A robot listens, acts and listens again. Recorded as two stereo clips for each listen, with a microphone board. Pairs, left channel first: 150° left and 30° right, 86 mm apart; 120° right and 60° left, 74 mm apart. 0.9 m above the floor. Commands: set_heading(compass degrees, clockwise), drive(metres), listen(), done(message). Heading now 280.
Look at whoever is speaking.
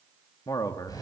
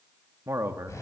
set_heading(170)
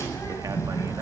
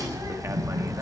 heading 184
set_heading(169)
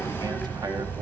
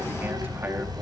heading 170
listen()
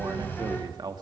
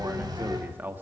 done("Found it: a man speaking, straight ahead.")